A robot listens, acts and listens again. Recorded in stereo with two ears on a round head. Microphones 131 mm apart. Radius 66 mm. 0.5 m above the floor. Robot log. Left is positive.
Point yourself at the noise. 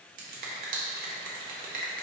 note: The finger snap: about 60° right or 120° right.
cmd yaw -60
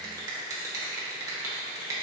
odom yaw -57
note: So it is at 30° right.
cmd yaw -30
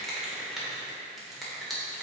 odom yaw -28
end: Facing the finger snap.